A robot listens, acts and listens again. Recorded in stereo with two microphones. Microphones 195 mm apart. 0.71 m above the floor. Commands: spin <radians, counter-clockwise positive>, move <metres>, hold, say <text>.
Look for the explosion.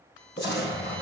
spin 1.05
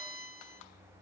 hold
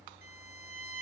say I heard an explosion, but can't make it out now. It was about straight ahead or 60° left.